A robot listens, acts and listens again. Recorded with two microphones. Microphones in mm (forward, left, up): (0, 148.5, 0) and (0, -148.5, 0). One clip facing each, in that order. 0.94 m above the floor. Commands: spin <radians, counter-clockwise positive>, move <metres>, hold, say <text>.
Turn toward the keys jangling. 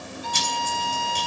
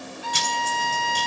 spin -1.31
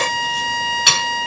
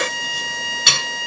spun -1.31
spin -0.44
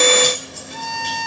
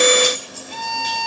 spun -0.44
hold
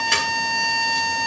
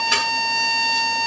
hold
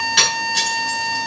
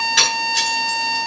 say Facing the keys jangling, over 4 m away.